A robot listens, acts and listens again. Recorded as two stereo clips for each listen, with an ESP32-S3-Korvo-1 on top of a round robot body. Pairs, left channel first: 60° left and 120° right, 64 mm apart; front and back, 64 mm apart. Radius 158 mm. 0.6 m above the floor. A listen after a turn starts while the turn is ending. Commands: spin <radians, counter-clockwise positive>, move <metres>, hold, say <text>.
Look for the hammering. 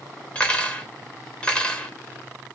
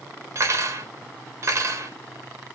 hold
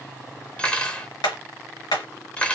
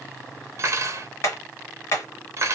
spin 0.79
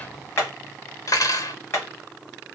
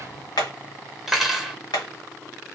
say Facing the hammering, 1 to 2 m away.